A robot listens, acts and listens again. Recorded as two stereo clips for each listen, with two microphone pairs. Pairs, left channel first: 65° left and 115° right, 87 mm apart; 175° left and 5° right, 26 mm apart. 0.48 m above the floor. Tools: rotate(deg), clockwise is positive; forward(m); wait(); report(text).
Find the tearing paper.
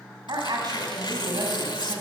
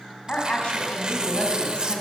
rotate(-50)
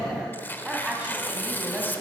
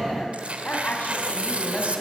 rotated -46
report("Facing the tearing paper.")